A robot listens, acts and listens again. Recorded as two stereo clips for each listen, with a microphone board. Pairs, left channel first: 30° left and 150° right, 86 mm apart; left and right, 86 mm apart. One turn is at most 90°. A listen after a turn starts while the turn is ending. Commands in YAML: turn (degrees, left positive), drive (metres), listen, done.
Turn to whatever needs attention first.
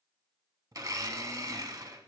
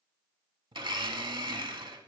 listen: true
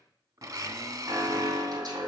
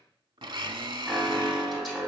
turn: -90
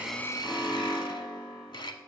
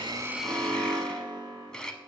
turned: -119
turn: -55
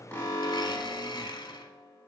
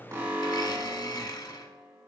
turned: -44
turn: -10
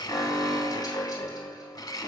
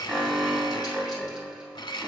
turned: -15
done: "Facing the alarm, 2 to 4 m away."